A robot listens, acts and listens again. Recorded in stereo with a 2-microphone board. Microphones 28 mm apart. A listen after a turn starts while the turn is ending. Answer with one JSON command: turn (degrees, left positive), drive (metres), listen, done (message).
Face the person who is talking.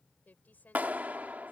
{"turn": 90}
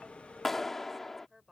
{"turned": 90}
{"turn": -10}
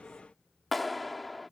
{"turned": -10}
{"listen": true}
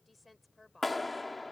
{"done": "Found it: a woman speaking, straight ahead."}